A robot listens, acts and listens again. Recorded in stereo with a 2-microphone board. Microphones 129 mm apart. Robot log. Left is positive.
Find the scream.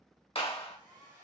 cmd idle
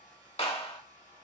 cmd idle
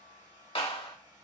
end: I can't make out a scream, only a hair dryer and a clap.